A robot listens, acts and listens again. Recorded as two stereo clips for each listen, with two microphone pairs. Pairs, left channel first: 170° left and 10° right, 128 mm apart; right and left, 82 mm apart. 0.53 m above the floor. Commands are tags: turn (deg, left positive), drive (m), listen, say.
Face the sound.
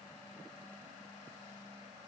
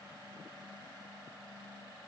<listen/>
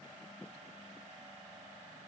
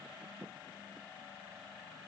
<listen/>
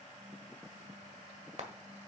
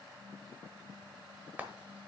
<turn deg="20"/>
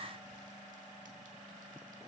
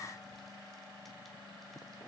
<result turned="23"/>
<listen/>
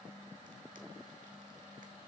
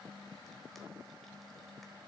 <listen/>
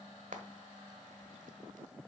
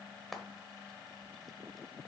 <say>Facing the frying.</say>